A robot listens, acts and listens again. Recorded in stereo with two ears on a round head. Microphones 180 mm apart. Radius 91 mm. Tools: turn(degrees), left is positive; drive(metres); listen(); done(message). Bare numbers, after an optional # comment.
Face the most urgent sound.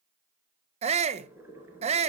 # The shout: about 35° right or 145° right.
turn(-35)
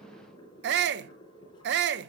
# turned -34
# So it is at 110° right.
turn(-110)
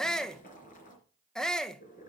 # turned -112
done("Facing the shout.")